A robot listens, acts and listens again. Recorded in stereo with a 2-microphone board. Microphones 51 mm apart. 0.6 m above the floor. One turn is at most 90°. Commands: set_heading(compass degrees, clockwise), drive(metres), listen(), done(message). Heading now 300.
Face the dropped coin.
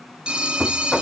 listen()
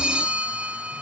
listen()
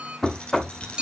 set_heading(280)
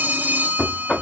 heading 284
listen()
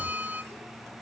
done("I heard a dropped coin, but can't make it out now. It was about 5° left or 140° left.")